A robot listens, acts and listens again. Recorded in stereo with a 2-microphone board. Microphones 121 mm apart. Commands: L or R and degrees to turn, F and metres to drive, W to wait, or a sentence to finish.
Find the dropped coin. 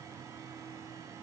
W
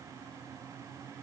W
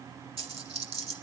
R50
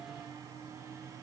W
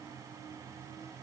I heard a dropped coin, but can't make it out now. It was about straight ahead or 80° right.